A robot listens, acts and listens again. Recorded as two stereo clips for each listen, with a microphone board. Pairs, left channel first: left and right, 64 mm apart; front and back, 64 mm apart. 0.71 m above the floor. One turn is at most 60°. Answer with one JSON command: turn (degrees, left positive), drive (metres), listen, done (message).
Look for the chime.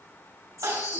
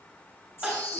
{"turn": -55}
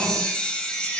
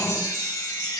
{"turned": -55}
{"turn": 20}
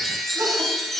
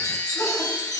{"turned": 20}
{"done": "Facing the chime."}